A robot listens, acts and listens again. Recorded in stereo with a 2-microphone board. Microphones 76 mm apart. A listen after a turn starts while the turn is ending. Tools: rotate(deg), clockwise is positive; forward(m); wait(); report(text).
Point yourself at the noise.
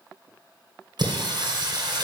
rotate(65)
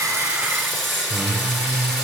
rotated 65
report("Found it: singing, straight ahead.")